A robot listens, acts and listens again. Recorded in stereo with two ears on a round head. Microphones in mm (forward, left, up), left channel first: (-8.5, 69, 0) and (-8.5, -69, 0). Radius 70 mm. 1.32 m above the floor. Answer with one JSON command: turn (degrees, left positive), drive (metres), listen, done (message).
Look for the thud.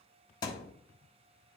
{"turn": 25}
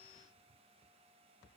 {"listen": true}
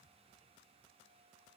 {"done": "I heard a thud, but can't make it out now. It was about straight ahead or 130° left."}